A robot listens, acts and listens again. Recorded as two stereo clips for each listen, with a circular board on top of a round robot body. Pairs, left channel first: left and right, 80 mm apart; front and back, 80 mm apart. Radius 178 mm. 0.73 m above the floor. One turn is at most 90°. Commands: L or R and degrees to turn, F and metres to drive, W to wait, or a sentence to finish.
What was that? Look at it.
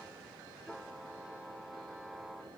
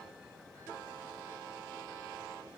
W
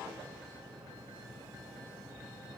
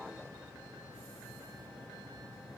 W
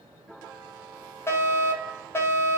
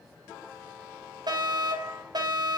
L90
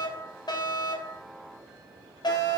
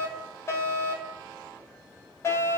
L55
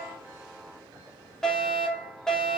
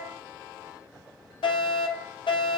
Facing the fire alarm.